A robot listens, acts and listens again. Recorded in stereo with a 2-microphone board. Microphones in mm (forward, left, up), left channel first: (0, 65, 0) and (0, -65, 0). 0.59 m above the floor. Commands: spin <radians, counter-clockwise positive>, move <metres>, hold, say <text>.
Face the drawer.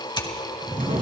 spin -1.57
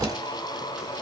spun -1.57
hold
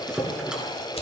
say Found it: a drawer, straight ahead, over 4 m away.